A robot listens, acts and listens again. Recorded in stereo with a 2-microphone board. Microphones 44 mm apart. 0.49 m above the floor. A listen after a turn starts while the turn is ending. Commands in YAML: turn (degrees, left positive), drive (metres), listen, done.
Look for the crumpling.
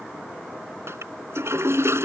listen: true
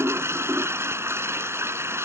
listen: true
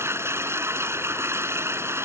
done: "I can't make out crumpling to turn to."